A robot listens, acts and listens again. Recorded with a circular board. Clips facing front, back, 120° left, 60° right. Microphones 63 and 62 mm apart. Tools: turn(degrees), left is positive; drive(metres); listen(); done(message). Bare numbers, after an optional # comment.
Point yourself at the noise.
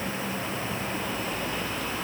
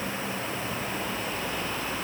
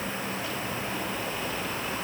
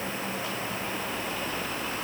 listen()
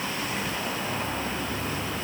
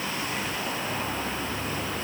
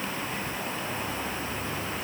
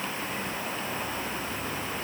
listen()
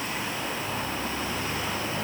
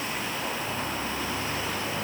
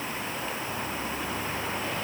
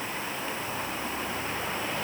done("I can't make out anything to turn to.")